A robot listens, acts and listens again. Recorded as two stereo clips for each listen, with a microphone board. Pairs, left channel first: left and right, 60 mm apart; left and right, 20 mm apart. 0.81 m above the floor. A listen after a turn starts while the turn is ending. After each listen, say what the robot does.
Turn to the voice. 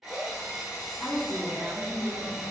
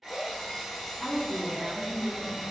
Turn 20° left.
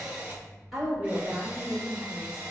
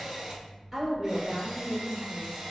Turn 15° right.
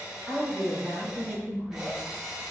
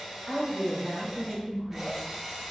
Turn 10° right.
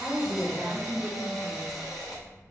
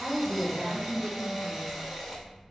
Facing the woman speaking.